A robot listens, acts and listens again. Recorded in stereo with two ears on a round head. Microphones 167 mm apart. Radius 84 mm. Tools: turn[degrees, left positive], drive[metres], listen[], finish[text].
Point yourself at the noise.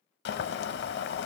Thought: The boiling: about 65° left or 115° left.
Action: turn[65]
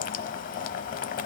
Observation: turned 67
Thought: So it is at 45° left.
Action: turn[45]
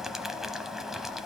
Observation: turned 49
Action: finish[Found it: boiling, straight ahead.]